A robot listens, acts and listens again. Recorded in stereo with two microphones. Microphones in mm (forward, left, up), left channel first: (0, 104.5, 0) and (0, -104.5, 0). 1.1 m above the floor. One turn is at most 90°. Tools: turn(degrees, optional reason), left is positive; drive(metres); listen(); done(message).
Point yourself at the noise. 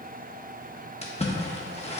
turn(degrees=30, reason="The splash: about 30° left or 150° left.")
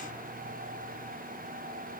listen()
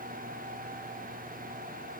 done("I heard a splash, but can't make it out now. It was about straight ahead or 120° left.")